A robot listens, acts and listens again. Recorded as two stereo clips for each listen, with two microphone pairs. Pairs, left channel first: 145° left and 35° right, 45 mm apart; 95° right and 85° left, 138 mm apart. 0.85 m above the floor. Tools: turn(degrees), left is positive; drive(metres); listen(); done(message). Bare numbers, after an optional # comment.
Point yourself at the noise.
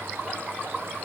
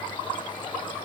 listen()
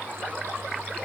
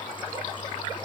listen()
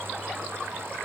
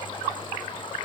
done("I can't make out anything to turn to.")